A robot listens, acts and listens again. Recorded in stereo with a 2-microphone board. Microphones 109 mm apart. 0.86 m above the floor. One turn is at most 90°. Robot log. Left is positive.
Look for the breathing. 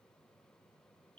cmd idle
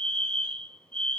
cmd idle
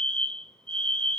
end: I can't make out breathing, only a fire alarm.